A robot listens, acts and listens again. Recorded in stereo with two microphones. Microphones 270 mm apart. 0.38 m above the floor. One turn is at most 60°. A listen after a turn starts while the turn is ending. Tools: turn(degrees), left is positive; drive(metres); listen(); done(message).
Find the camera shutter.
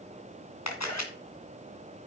turn(degrees=60)
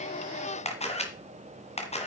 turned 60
turn(degrees=25)
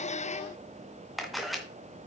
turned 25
done("Found it: a camera shutter, straight ahead, 2 to 4 m away.")